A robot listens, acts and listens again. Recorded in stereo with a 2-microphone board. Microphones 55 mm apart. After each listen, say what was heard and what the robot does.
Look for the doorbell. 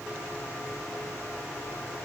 Keep listening.
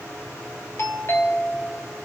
The doorbell: about 50° left or 130° left. Turn 50° left.
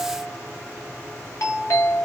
So it is at 70° left. Turn 70° left.
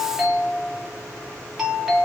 Facing the doorbell.